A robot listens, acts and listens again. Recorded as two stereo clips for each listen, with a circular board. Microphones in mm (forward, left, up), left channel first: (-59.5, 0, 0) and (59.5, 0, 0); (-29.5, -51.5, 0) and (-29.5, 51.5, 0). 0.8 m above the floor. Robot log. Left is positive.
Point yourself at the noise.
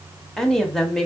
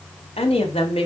note: The woman speaking: 95° right.
cmd yaw -95
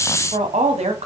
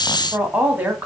note: The woman speaking is now 15° left.
cmd yaw +15
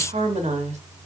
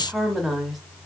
end: Facing the woman speaking.